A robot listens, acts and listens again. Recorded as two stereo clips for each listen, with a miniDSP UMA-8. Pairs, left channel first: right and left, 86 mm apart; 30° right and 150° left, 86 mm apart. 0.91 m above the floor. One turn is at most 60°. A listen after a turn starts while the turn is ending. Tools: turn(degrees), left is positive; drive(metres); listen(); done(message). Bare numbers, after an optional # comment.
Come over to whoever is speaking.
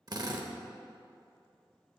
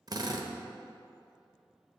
listen()
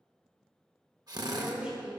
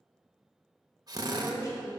# The woman speaking: 15° left.
turn(15)
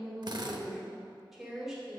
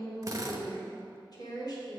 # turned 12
drive(1.0)
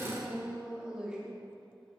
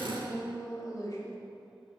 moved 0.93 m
# The woman speaking is now 10° left.
turn(10)
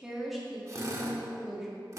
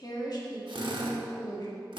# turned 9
drive(1.0)
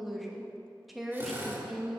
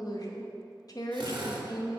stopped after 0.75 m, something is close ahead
done("I am next to the woman speaking.")